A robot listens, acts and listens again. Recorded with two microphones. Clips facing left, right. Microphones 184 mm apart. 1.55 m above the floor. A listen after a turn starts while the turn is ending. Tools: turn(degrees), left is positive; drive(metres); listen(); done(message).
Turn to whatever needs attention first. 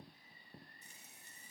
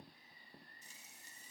listen()
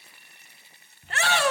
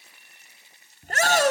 turn(degrees=-40)
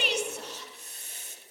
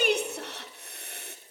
turn(degrees=-90)
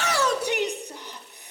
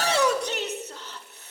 turn(degrees=15)
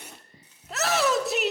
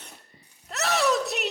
done("Facing the shout, under 1 m away.")